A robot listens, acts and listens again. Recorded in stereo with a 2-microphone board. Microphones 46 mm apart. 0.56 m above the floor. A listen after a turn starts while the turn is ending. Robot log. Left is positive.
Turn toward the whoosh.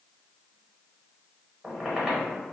cmd idle
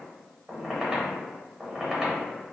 cmd idle
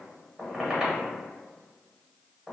end: I can't make out a whoosh, only a squeak.